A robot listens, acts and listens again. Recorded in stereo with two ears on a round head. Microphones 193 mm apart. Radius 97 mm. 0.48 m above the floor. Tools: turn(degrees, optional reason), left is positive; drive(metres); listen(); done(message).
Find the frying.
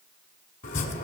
listen()
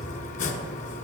listen()
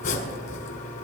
done("I can't make out frying to turn to.")